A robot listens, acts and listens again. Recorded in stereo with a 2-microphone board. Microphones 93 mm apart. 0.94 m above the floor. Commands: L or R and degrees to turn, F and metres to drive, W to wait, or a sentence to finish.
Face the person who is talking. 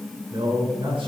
R70
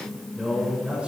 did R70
R15
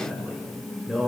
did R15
Found it: a man speaking, straight ahead.